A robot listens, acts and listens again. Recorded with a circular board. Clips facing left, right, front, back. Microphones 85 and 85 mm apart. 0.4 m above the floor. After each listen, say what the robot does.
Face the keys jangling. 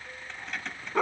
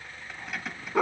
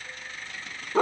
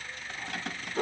Turn 175° right.
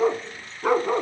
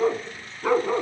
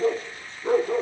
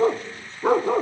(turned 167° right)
Keep listening.
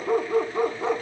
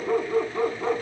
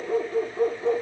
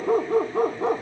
Keep listening.
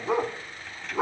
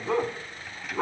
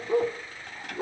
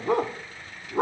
Facing where the keys jangling came from. I can't hear it now.